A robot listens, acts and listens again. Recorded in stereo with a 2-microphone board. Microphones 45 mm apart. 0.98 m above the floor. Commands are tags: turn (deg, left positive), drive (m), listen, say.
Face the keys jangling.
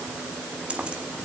<turn deg="-25"/>
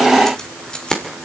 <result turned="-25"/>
<turn deg="20"/>
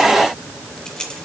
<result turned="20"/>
<turn deg="15"/>
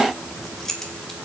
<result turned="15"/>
<turn deg="10"/>
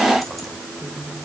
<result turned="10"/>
<say>Facing the keys jangling, 2 to 4 m away.</say>